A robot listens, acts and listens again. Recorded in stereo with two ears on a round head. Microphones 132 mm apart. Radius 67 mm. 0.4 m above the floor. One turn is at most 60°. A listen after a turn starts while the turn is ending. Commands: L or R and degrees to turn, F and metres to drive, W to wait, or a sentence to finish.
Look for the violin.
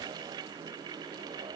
W
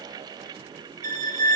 R60
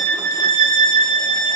R60
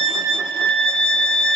Facing the violin, under 1 m away.